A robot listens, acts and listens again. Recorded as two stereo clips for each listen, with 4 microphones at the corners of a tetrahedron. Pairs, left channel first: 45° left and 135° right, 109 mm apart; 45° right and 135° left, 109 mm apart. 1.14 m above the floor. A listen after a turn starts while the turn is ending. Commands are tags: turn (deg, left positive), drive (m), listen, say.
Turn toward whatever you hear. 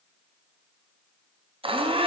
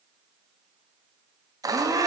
<turn deg="-170"/>
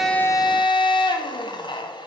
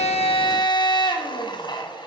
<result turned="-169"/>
<say>Facing the blender, under 1 m away.</say>